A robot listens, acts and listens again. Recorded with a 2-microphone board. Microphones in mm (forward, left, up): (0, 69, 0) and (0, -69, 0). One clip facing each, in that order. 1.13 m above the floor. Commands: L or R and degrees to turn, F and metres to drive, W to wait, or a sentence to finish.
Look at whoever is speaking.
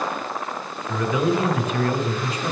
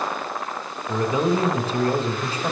R30
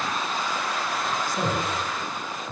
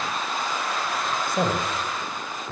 R125
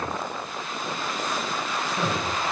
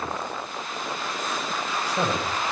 R35
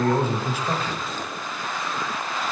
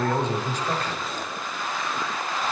Facing the man speaking, under 1 m away.